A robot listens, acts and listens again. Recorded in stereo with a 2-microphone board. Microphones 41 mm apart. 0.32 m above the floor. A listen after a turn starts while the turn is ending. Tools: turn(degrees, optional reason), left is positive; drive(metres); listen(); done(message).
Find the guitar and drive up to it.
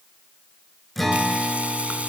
turn(degrees=-30)
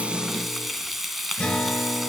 turn(degrees=30, reason="So it is at 30° left.")
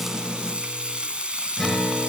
drive(metres=1.0)
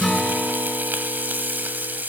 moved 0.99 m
drive(metres=1.0)
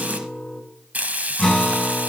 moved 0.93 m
turn(degrees=10, reason="The guitar is now 10° left.")
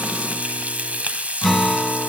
drive(metres=1.0)
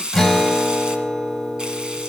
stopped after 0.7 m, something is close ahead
done("I am next to the guitar.")